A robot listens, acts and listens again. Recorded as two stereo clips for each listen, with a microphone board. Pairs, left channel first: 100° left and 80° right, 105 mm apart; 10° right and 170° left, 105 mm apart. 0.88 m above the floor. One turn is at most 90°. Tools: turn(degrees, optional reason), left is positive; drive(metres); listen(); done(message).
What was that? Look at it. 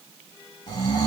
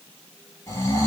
turn(degrees=55, reason="The snoring: 55° left.")
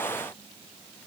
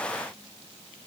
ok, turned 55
listen()
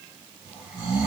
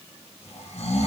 done("Facing the snoring, 2 to 4 m away.")